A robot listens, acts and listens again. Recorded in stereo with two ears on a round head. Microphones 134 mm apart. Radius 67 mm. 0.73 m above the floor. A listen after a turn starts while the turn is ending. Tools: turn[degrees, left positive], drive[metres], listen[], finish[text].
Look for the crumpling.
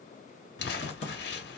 Thought: The crumpling: about 70° left or 110° left.
Action: turn[70]
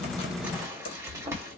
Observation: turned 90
Thought: So it is at 15° right.
Action: turn[-15]
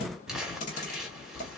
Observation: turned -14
Action: finish[Found it: crumpling, straight ahead, 1 to 2 m away.]